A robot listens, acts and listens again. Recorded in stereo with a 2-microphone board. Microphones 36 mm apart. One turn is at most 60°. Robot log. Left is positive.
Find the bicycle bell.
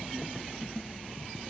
cmd idle
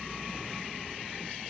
cmd idle
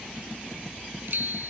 note: The bicycle bell: about 60° right or 120° right.
cmd yaw -60
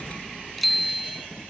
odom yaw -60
end: Found it: a bicycle bell, straight ahead.